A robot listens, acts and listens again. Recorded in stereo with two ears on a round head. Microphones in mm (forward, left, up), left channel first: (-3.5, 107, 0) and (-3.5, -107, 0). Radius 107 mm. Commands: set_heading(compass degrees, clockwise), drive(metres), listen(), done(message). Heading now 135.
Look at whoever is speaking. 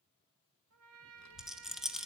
set_heading(45)
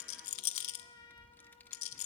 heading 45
set_heading(35)
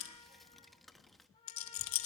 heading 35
done("Facing the child speaking.")